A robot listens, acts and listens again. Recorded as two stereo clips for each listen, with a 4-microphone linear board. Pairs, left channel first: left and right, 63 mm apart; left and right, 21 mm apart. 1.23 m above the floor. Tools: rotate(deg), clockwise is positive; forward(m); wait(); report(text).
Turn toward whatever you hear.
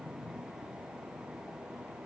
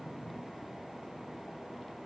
wait()
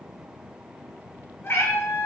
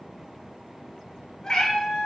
rotate(-40)
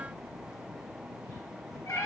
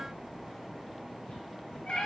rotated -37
rotate(-100)
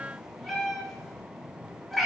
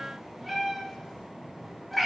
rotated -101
report("Found it: a cat meowing, straight ahead.")